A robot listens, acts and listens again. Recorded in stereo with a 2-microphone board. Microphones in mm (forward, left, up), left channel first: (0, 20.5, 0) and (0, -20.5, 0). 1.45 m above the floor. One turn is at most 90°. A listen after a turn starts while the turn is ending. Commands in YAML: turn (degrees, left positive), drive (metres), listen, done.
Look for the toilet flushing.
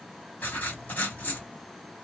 listen: true
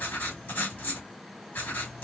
listen: true
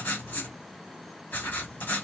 done: "I can't make out a toilet flushing to turn to."